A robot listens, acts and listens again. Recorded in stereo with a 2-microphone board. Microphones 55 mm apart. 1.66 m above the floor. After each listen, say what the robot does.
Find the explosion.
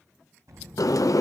Turn 70° right.
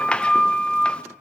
Keep listening.
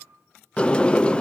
I heard an explosion, but can't make it out now. It was about straight ahead or 40° right.